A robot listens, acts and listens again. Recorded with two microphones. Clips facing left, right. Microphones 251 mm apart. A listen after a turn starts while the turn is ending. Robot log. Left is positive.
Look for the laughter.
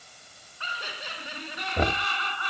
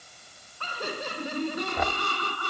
note: The laughter: about 45° right or 135° right.
cmd yaw -45
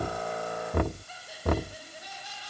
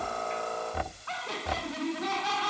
note: So it is at 80° right.
cmd yaw -80
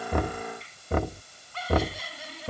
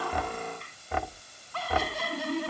note: The laughter is now 65° right.
cmd yaw -65
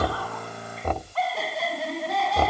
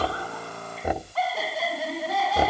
end: Found it: laughter, straight ahead.